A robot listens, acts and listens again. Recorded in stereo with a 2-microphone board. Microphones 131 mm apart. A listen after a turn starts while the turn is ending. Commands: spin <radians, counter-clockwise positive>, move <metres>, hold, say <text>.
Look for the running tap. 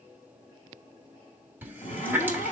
spin -0.26
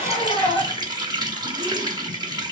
spin -2.62
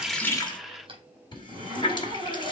spin 0.61
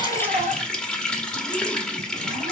say Facing the running tap.